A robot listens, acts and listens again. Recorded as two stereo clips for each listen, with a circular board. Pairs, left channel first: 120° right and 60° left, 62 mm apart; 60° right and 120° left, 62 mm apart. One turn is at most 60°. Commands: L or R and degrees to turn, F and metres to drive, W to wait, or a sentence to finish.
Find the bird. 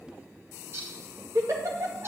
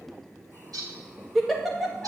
L60
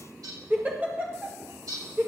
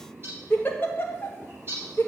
L60
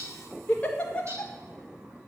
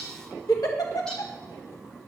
L10
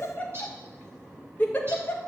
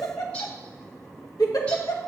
W
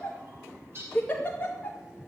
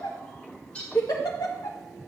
L10
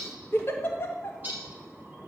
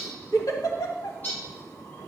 Facing the bird.